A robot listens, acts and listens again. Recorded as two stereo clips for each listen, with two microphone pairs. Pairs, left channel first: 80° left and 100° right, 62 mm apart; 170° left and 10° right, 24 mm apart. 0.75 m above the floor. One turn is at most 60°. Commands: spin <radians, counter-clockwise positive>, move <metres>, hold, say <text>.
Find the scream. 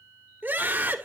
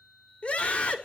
spin -1.05
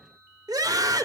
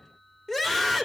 spin -1.05
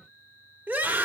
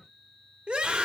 spin -0.70
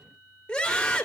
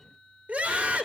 say Facing the scream.